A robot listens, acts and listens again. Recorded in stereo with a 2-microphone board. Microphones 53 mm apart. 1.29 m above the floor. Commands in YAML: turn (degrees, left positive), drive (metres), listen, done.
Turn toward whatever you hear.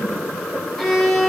turn: 30
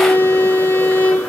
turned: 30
turn: 140
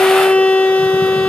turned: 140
turn: 25
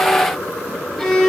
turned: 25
done: "Facing the violin."